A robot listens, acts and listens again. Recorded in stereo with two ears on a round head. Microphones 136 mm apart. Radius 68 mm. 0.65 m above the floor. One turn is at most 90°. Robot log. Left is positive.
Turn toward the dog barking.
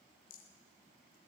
cmd idle
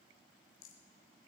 cmd idle
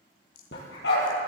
note: The dog barking: about 75° left or 105° left.
cmd yaw +75
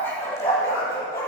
note: So it is at 20° left.
cmd yaw +20
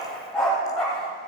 end: Facing the dog barking.